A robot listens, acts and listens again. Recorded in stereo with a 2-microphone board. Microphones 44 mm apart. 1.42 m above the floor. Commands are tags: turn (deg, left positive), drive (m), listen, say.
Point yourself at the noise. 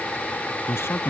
<turn deg="90"/>
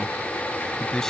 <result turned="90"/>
<turn deg="10"/>
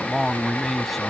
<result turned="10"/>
<say>Found it: a man speaking, straight ahead.</say>